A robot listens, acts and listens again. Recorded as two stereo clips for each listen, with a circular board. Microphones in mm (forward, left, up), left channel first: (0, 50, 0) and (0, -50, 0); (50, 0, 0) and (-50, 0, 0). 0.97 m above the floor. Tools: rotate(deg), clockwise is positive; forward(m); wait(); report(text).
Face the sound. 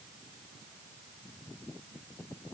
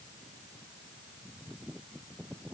wait()
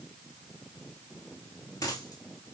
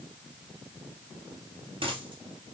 rotate(-145)
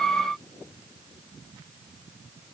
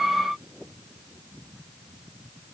report("Facing where the dropped coin came from. I can't hear it now.")